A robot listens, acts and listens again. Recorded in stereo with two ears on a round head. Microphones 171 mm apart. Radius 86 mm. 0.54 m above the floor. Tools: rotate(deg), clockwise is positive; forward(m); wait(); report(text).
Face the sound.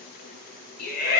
rotate(-55)
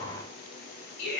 rotate(-65)
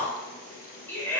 rotate(-15)
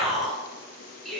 report("Facing the shout.")